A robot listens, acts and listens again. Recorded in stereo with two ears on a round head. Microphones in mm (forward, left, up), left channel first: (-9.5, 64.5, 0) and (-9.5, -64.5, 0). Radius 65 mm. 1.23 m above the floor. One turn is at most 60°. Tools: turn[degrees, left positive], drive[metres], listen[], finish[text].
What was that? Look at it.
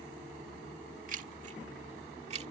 Thought: The keys jangling: about 50° right or 130° right.
Action: turn[-50]
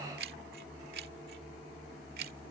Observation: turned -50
Thought: So it is at 75° right.
Action: turn[-60]
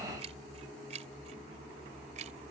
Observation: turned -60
Thought: The keys jangling is now 50° right.
Action: turn[-50]
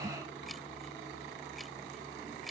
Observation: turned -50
Action: listen[]
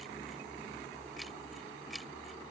Action: listen[]
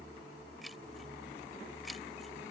Action: finish[I heard keys jangling from this way, but can't make it out now.]